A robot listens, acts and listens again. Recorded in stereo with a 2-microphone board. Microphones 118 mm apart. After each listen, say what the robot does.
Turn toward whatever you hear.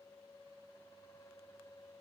Keep listening.
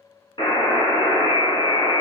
Turn 45° left.
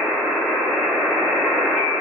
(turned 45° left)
Facing the buzzer, 1 to 2 m away.